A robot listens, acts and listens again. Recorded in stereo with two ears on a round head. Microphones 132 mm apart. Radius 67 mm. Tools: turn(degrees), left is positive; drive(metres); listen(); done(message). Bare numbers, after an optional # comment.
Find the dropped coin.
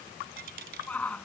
turn(-90)
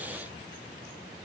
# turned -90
done("Facing where the dropped coin came from. I can't hear it now.")